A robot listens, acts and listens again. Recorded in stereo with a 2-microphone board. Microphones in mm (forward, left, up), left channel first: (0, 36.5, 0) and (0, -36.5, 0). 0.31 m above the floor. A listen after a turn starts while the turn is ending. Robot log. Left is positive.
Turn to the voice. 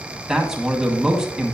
cmd yaw -30
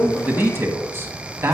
note: So it is at 140° right.
cmd yaw -140
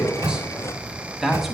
end: Found it: a man speaking, straight ahead, 1 to 2 m away.